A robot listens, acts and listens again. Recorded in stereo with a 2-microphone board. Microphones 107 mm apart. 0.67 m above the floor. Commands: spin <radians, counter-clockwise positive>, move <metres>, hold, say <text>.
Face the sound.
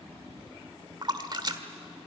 spin -0.79
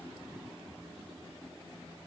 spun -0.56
hold
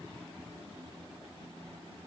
say I heard a splash, but can't make it out now. It was about 10° right or 105° right.